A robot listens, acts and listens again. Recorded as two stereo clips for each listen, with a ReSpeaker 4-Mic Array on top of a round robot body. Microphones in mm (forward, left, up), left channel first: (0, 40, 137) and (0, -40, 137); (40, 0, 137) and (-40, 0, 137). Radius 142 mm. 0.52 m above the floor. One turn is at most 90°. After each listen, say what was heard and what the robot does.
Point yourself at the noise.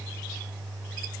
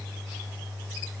Keep listening.
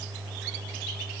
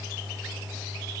Keep listening.
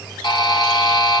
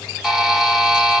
The buzzer: 95° left. Turn 90° left.
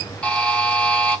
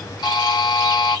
The buzzer is now 15° left. Turn 15° left.
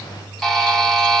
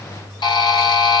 Facing the buzzer.